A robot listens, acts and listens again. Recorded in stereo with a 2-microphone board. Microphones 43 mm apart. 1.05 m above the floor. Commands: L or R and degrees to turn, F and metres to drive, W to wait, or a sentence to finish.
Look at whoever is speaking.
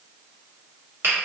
W
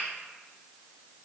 W
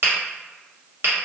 I can't make out anyone speaking to turn to.